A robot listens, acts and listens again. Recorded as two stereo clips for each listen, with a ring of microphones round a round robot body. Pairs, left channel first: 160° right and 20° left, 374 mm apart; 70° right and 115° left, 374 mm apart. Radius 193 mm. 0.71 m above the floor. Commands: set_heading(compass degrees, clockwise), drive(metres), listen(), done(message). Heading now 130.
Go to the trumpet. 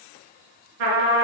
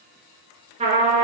set_heading(90)
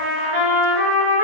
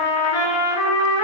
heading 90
set_heading(105)
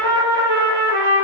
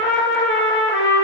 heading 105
drive(1.0)
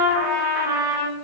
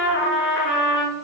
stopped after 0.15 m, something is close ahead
done("Something is in my way. I am facing the trumpet but have not reached it.")